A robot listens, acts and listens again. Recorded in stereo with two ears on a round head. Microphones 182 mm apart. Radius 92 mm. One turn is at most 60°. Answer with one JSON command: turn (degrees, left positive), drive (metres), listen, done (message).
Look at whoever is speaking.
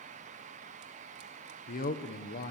{"turn": 40}
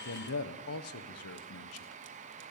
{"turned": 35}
{"turn": 60}
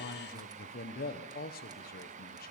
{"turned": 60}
{"turn": 40}
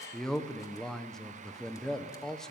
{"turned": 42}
{"done": "Facing the man speaking, 1 to 2 m away."}